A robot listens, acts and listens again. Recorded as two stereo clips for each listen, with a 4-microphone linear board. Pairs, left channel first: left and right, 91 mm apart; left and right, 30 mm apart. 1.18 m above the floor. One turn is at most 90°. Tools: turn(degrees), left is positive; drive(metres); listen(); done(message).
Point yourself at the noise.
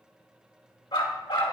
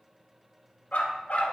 turn(degrees=70)
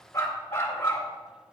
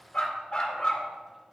turn(degrees=30)
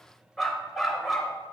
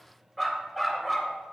done("Found it: a dog barking, straight ahead, 2 to 4 m away.")